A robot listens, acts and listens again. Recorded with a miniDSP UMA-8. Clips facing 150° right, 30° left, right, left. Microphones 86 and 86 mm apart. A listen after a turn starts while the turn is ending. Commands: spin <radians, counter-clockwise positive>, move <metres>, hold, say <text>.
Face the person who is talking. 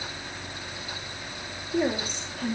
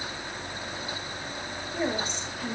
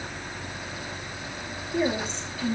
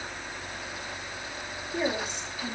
spin 2.97
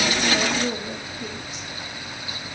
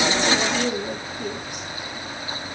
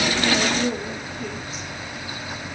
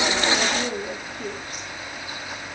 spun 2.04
spin 0.87
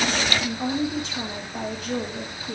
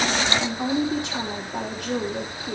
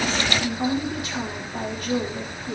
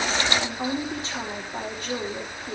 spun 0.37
spin 0.52
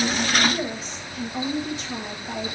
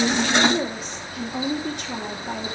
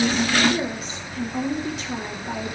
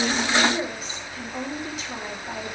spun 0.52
say Found it: a woman speaking, straight ahead.